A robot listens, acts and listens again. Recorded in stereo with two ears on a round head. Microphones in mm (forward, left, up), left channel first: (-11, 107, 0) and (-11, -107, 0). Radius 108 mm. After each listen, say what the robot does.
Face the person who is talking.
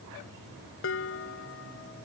Keep listening.
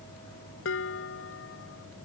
Keep listening.
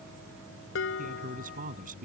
Turn 35° right.
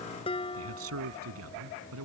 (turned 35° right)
Turn 110° right.
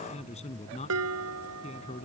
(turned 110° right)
Turn 30° left.
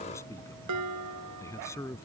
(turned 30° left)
Turn 10° left.
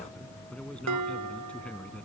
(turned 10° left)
Facing the man speaking.